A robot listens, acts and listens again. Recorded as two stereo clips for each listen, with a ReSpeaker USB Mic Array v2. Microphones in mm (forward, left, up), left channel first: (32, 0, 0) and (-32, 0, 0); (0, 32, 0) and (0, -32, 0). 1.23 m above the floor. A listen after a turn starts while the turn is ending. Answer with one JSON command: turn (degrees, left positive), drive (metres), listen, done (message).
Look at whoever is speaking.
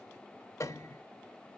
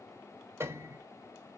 {"listen": true}
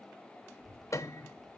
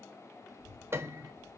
{"turn": -135}
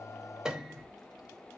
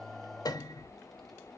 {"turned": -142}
{"done": "Facing the child speaking, 2 to 4 m away."}